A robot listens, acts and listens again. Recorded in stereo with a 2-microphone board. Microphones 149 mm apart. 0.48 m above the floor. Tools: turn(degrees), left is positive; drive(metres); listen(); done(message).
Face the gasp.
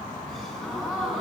turn(degrees=30)
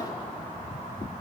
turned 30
listen()
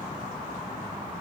done("I heard a gasp, but can't make it out now. It was about 25° right or 145° left.")